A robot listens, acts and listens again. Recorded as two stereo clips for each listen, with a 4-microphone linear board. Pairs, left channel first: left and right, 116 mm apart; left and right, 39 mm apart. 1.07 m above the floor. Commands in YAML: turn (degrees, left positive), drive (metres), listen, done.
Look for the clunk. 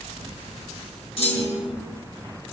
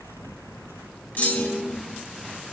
turn: 55
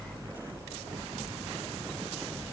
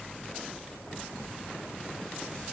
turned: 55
listen: true
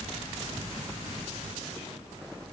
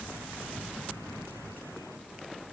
done: "I heard a clunk, but can't make it out now. It was about straight ahead or 70° left."